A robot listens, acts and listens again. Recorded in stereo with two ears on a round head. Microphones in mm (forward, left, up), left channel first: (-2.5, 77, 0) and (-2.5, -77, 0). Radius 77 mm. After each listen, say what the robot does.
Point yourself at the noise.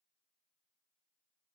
Keep listening.
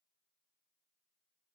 Keep listening.
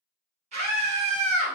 Turn 45° right.
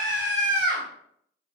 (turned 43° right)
Found it: a scream, straight ahead, 1 to 2 m away.